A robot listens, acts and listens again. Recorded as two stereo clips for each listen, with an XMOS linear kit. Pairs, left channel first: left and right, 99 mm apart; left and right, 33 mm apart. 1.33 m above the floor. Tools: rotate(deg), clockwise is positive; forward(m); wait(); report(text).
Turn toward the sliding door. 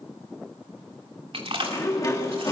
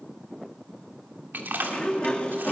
rotate(-35)
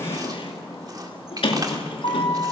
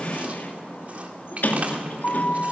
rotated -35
rotate(-110)
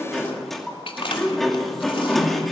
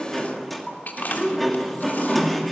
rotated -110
report("Found it: a sliding door, straight ahead.")